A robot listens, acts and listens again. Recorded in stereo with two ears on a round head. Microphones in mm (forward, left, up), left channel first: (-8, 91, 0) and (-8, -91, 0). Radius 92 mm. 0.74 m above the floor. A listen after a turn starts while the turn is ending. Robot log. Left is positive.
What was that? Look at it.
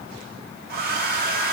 note: The hair dryer: about 50° right or 130° right.
cmd yaw -50
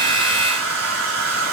note: So it is at 80° right.
cmd yaw -80
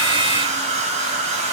note: The hair dryer is now 35° right.
cmd yaw -35
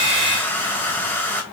note: The hair dryer is now 10° left.
cmd yaw +10
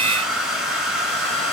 end: Found it: a hair dryer, straight ahead, 1 to 2 m away.